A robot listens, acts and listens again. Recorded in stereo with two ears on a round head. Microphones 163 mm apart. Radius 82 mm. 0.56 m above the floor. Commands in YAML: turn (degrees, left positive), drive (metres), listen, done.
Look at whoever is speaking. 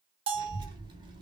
turn: -25
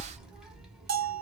done: "Found it: a child speaking, straight ahead, 1 to 2 m away."